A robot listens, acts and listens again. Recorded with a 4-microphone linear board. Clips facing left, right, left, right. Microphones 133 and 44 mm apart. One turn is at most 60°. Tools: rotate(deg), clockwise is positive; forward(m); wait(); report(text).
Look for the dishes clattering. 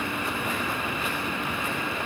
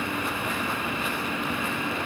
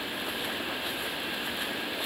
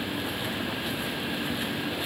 wait()
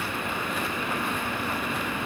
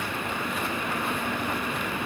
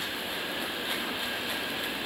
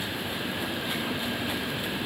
wait()
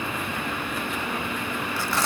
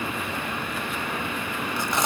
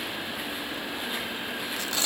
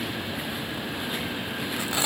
report("I can't make out dishes clattering, only tearing paper.")